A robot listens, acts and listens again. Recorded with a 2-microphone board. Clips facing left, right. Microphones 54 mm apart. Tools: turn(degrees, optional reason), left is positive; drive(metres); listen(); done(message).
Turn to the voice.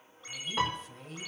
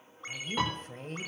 turn(degrees=-50, reason="The woman speaking: about 50° right or 130° right.")
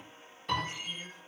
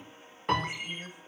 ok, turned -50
listen()
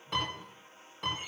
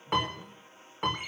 listen()
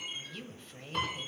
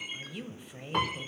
turn(degrees=-20, reason="So it is at 20° right.")
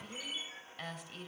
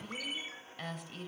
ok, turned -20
done("Found it: a woman speaking, straight ahead.")